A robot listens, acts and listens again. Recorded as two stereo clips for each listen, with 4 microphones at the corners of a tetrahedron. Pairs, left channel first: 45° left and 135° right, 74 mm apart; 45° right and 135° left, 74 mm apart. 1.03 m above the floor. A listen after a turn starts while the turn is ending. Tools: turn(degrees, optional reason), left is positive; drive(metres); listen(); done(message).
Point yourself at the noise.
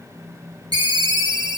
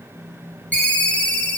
turn(degrees=-115, reason="The ringtone: 115° right.")
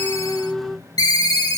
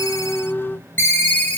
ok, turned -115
turn(degrees=20, reason="The ringtone is now 20° left.")
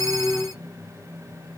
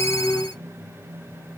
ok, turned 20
listen()
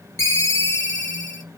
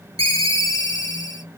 done("Facing the ringtone, under 1 m away.")